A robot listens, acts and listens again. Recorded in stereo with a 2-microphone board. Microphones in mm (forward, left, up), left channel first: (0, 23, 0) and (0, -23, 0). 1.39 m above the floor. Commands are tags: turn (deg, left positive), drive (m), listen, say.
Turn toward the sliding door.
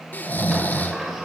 <turn deg="-30"/>
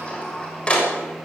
<turn deg="25"/>
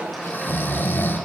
<say>Facing the sliding door, over 4 m away.</say>